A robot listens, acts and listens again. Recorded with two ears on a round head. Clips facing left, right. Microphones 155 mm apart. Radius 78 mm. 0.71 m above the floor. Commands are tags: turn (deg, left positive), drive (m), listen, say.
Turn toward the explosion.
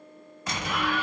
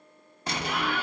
<turn deg="-25"/>
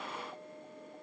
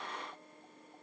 <listen/>
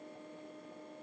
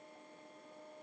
<say>I heard an explosion, but can't make it out now. It was about straight ahead or 130° right.</say>